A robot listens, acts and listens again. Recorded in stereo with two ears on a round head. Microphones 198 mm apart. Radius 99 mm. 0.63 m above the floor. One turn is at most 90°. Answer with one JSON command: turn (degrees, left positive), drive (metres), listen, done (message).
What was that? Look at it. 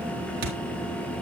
{"turn": -45}
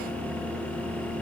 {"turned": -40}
{"listen": true}
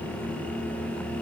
{"done": "I heard a thud, but can't make it out now. It was about 5° right or 95° right."}